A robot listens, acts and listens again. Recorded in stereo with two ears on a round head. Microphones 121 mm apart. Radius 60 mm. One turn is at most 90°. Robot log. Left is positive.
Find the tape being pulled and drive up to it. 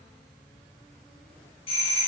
cmd idle
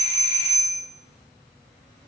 cmd idle
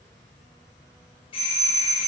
end: I can't make out tape being pulled, only a doorbell.